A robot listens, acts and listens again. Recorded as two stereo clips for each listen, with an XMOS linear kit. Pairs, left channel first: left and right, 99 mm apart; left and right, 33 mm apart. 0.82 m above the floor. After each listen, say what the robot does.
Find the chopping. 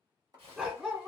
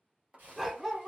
Turn 40° right.
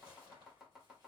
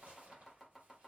Turn 10° right.
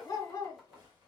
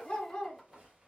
Keep listening.
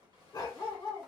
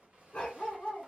Keep listening.
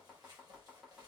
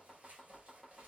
Found it: chopping, straight ahead, 1 to 2 m away.